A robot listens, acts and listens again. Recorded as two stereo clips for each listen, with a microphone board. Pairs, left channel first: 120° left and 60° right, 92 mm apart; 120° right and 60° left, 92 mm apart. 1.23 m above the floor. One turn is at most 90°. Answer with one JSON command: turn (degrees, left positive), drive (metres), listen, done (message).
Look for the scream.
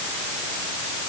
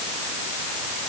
{"listen": true}
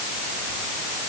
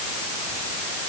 {"listen": true}
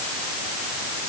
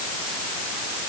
{"done": "I can't make out a scream."}